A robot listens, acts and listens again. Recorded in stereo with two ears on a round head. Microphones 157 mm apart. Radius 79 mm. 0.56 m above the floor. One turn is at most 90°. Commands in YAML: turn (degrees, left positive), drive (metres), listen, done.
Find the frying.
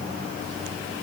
listen: true
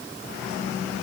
listen: true
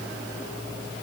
done: "I can't make out frying to turn to."